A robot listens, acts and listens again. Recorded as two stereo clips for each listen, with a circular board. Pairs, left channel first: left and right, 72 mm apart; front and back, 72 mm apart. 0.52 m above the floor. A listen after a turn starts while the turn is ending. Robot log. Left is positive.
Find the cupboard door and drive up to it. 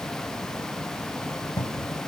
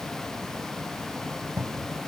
note: The cupboard door: 105° left.
cmd yaw +105
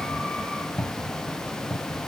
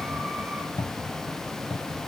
note: The cupboard door is now 15° left.
cmd yaw +15
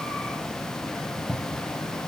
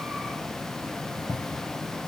cmd fwd 1.0
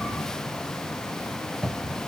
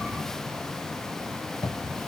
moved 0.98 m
cmd fwd 1.0
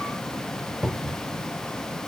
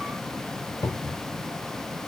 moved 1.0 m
note: The cupboard door is now 10° right.
cmd yaw -10
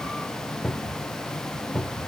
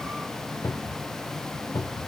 cmd fwd 1.0
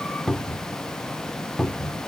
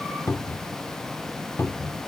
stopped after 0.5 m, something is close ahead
note: The cupboard door is now 10° left.
cmd yaw +10
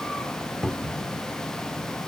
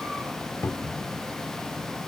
end: I am next to the cupboard door.